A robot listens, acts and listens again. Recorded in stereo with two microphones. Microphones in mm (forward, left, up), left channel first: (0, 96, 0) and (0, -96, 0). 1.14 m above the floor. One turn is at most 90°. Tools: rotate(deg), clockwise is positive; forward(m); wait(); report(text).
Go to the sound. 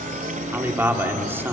rotate(30)
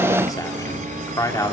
rotate(-20)
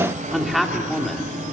forward(1.0)
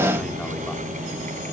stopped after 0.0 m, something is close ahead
wait()
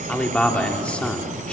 report("Something is in my way. I am facing the man speaking but have not reached it.")